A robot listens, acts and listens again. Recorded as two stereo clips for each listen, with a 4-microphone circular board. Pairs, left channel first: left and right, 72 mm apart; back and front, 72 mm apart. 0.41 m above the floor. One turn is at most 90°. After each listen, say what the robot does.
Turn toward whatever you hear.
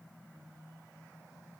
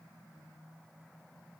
Keep listening.
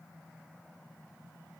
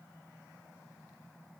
Keep listening.
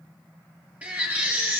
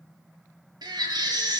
Turn 20° right.
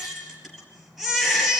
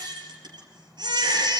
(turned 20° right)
Found it: a baby crying, straight ahead, 2 to 4 m away.